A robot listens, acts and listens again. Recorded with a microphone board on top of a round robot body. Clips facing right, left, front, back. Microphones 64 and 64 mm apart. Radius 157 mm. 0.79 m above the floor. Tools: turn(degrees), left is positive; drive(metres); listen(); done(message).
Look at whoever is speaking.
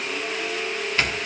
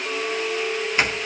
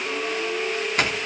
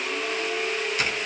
listen()
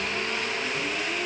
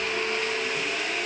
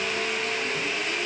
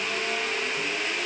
listen()
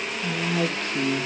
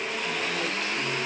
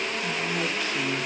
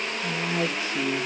turn(degrees=-115)
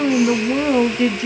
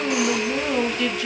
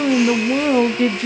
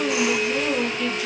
turn(degrees=-30)
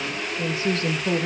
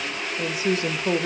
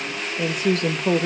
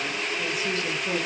turn(degrees=20)
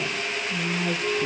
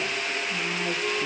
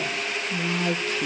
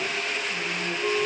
done("Facing the woman speaking.")